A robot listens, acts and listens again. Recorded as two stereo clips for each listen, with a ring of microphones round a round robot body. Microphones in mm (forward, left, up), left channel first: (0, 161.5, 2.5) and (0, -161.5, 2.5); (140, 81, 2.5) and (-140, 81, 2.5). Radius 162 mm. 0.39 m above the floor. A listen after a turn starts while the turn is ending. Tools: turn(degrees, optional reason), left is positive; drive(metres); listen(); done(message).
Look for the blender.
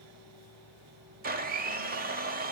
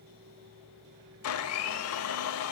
turn(degrees=-30, reason="The blender: 30° right.")
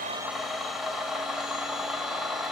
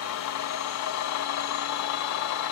done("Found it: a blender, straight ahead.")